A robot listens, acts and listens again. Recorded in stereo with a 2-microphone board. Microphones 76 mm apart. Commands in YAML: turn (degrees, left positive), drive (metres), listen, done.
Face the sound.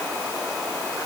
listen: true
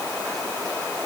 listen: true
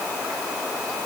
done: "I can't make out anything."